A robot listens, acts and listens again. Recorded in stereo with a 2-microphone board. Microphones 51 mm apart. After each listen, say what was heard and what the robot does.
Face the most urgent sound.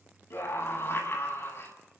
The scream: about 55° left or 125° left. Turn 55° left.
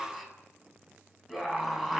Facing the scream, over 4 m away.